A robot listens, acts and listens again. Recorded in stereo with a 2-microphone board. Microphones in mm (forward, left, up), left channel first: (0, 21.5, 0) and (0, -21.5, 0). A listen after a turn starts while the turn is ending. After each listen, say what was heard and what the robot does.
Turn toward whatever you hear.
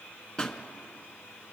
The pop: about 20° left or 160° left. Turn 20° left.
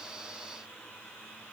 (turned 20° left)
Keep listening.
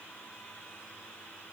I heard a pop, but can't make it out now. It was about straight ahead or 140° left.